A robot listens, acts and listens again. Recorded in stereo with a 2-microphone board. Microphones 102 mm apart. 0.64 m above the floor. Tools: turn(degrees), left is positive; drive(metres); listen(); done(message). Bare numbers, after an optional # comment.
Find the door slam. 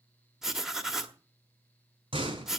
# The door slam: about 70° right or 110° right.
turn(-70)
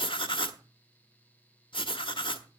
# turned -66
listen()
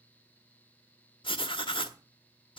done("I heard a door slam, but can't make it out now. It was about straight ahead or 45° right.")